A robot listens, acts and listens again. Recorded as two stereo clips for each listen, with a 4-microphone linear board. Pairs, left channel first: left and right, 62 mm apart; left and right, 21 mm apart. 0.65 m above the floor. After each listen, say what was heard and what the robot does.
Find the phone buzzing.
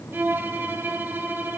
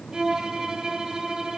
Keep listening.
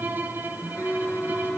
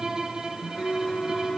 Turn 30° left.
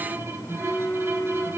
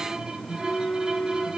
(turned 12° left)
So it is at 155° left. Turn 155° left.
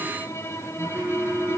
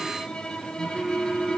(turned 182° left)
The phone buzzing is now 25° right. Turn 25° right.
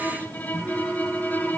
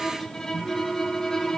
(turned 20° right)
Found it: a phone buzzing, straight ahead.